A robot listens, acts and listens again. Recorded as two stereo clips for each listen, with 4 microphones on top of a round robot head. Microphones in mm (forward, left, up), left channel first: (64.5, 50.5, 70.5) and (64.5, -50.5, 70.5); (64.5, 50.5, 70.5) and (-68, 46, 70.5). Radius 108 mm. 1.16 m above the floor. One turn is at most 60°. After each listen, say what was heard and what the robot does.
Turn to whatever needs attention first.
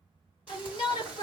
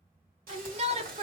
The shout: 140° left. Turn 60° left.
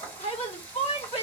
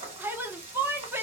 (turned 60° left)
The shout is now 110° left. Turn 60° left.
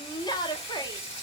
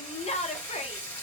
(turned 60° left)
The shout is now 40° left. Turn 40° left.
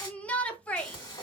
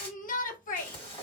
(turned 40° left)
The shout is now 10° left. Turn 10° left.
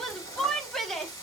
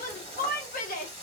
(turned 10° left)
Found it: a shout, straight ahead.